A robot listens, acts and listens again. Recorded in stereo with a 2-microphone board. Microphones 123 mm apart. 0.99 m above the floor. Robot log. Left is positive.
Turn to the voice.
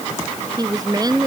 note: The woman speaking: about 30° right or 150° right.
cmd yaw -30
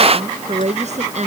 note: So it is at 120° right.
cmd yaw -120
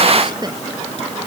cmd idle
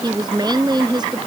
note: The woman speaking is now 35° right.
cmd yaw -35
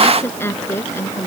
note: The woman speaking is now 20° left.
cmd yaw +20
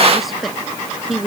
end: Found it: a woman speaking, straight ahead.